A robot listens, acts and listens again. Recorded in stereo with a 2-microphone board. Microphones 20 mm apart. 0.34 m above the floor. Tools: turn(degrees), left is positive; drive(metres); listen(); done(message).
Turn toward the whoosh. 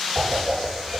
turn(degrees=-70)
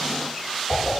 done("Found it: a whoosh, straight ahead, over 4 m away.")